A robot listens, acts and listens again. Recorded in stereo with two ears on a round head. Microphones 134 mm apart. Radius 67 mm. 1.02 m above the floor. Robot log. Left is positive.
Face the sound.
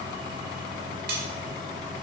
note: The cutlery clinking: about 70° right or 110° right.
cmd yaw -70
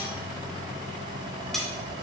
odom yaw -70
end: Found it: cutlery clinking, straight ahead, 1 to 2 m away.